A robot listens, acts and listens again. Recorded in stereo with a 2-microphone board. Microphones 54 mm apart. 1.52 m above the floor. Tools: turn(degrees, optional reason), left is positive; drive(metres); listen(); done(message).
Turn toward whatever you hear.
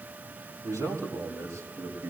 turn(degrees=-90)
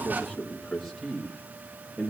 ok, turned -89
done("Found it: a man speaking, straight ahead, 2 to 4 m away.")